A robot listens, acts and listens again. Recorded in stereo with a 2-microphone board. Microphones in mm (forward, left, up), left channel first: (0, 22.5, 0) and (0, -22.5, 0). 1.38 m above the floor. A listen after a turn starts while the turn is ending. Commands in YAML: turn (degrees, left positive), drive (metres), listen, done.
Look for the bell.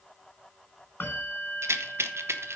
turn: 55
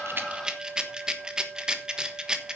done: "Facing the bell."